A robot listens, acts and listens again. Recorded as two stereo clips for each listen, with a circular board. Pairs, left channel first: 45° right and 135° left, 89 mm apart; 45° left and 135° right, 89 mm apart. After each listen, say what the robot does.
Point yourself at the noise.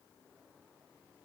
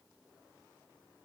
Keep listening.
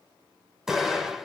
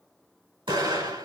Turn 140° right.
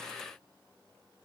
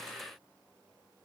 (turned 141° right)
Facing where the explosion came from. I can't hear it now.